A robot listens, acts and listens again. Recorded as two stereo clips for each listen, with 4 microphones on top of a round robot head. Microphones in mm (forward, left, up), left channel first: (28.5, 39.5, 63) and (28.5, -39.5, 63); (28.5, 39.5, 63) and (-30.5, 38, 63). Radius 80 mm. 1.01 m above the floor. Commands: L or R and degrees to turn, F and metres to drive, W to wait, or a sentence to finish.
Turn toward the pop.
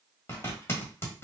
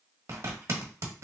W
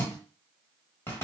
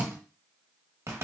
W
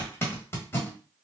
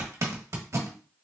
I can't make out a pop to turn to.